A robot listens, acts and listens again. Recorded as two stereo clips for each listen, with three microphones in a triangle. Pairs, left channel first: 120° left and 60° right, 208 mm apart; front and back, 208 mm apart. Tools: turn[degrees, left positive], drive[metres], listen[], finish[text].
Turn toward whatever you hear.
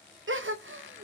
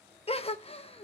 Thought: The gasp: 60° right.
Action: turn[-60]
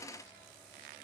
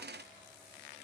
Action: finish[I heard a gasp from this way, but can't make it out now.]